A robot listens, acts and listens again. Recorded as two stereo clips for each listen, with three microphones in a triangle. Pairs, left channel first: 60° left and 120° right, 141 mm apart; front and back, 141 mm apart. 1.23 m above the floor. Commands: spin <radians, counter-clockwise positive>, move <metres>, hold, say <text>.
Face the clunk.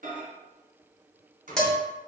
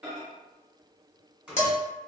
hold
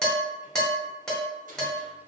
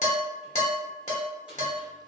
hold
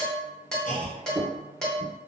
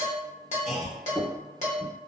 spin 1.48
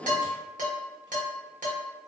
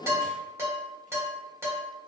say Facing where the clunk came from. I can't hear it now.